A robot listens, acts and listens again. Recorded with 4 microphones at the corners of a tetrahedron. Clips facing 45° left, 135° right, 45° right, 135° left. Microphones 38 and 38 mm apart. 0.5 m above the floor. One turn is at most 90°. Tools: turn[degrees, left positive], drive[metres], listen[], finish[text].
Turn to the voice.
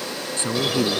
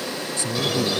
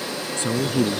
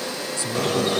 Action: finish[Found it: a woman speaking, straight ahead.]